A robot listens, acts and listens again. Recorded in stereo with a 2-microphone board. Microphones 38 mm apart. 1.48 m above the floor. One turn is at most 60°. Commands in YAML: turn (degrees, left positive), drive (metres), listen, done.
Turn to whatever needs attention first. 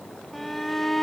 turn: 30
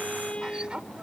turn: -30
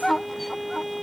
done: "Found it: a shout, straight ahead."